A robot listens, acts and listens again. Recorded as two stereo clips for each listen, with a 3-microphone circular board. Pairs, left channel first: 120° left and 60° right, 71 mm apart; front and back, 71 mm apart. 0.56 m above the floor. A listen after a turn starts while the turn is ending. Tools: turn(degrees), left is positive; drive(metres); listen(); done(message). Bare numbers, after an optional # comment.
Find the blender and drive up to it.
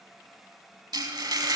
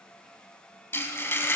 listen()
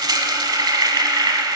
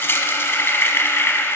listen()
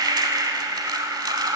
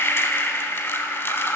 done("I can't make out a blender, only frying.")